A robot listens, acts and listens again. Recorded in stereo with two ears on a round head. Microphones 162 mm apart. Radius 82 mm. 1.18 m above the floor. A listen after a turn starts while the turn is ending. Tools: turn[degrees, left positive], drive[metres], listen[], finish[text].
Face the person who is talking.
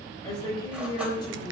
Thought: The woman speaking: about 25° left or 155° left.
Action: turn[25]
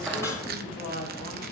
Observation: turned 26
Thought: So it is at 130° left.
Action: turn[130]
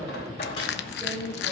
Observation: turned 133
Action: finish[Found it: a woman speaking, straight ahead, over 4 m away.]